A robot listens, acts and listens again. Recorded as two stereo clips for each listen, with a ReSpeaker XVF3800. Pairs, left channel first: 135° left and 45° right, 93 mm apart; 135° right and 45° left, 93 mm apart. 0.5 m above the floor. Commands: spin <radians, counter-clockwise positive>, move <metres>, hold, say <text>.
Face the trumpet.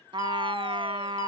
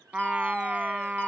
spin -0.61
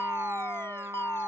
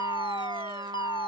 spin 0.26
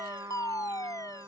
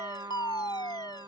say Found it: a trumpet, straight ahead.